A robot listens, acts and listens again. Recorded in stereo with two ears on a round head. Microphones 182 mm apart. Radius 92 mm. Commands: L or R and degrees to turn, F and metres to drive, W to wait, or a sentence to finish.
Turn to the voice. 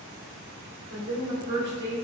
R50
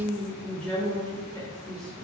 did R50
L25
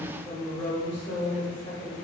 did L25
L35
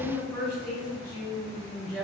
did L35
L15
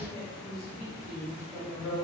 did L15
Found it: a woman speaking, straight ahead, 1 to 2 m away.